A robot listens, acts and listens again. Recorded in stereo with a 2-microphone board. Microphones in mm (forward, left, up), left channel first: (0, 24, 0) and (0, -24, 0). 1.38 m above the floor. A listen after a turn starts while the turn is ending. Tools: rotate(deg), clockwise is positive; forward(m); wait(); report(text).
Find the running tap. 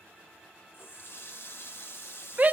rotate(-55)
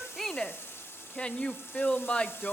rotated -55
rotate(-65)
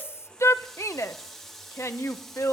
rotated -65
report("Facing the running tap, 1 to 2 m away.")